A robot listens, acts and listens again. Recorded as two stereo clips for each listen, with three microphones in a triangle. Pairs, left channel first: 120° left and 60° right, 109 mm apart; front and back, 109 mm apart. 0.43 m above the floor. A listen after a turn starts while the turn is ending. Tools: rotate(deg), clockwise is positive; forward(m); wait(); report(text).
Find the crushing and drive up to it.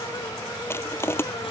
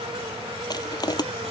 rotate(-50)
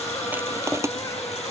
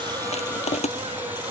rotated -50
forward(1.0)
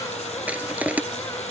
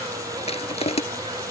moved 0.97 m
rotate(-15)
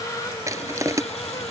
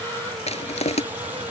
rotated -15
forward(1.0)
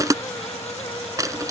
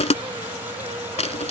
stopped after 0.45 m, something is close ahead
report("Arrived at the crushing, straight ahead.")